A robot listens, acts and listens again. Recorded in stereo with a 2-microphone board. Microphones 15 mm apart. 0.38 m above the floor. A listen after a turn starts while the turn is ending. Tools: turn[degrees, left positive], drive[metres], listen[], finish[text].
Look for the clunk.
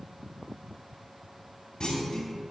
Thought: The clunk: about 70° left or 110° left.
Action: turn[70]
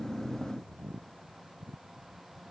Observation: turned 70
Action: listen[]
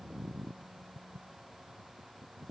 Action: finish[I heard a clunk, but can't make it out now. It was about straight ahead or 40° left.]